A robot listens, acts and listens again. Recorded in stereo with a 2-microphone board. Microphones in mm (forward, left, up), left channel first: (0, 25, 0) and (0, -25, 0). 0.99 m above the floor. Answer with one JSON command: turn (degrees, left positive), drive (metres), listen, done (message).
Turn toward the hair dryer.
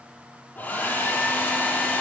{"turn": 35}
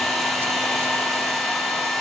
{"done": "Facing the hair dryer, over 4 m away."}